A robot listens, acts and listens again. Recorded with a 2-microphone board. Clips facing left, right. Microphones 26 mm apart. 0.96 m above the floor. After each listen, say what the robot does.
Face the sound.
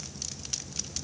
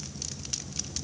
Keep listening.
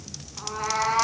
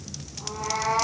Turn 90° left.
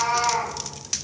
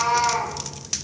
Facing the cat meowing.